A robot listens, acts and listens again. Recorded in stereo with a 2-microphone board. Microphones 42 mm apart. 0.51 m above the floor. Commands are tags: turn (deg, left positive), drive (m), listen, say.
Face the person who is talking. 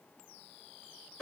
<listen/>
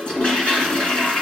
<listen/>
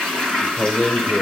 <turn deg="30"/>
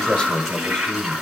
<turn deg="150"/>
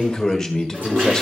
<turn deg="15"/>
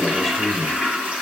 <say>Facing the man speaking.</say>